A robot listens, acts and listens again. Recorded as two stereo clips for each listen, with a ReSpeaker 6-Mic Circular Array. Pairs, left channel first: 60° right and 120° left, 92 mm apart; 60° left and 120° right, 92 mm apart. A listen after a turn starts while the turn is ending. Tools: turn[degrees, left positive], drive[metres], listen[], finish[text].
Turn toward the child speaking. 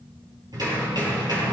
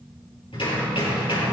Action: listen[]
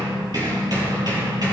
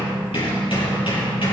Action: listen[]
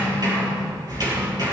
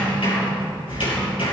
Action: finish[I can't make out a child speaking, only hammering.]